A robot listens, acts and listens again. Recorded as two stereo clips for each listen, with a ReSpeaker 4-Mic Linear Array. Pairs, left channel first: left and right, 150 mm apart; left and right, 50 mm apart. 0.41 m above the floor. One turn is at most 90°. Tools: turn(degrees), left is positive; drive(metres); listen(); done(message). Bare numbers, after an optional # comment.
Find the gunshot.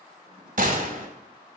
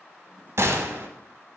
# The gunshot: about 65° right or 115° right.
turn(-65)
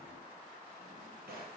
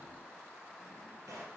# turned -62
listen()
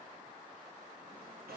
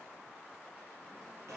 done("I heard a gunshot, but can't make it out now. It was about 5° right or 50° right.")